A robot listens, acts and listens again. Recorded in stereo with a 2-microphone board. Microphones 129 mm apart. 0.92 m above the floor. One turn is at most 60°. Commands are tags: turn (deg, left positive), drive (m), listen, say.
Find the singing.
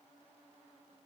<listen/>
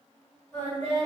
<turn deg="30"/>
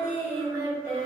<turn deg="-15"/>
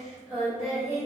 <turn deg="-10"/>
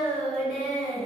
<say>Facing the singing, 1 to 2 m away.</say>